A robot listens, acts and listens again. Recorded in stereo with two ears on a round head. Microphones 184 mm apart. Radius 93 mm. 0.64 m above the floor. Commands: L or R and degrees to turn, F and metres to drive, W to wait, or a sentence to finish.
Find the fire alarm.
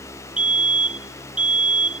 R30
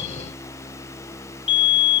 L25
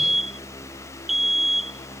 Facing the fire alarm.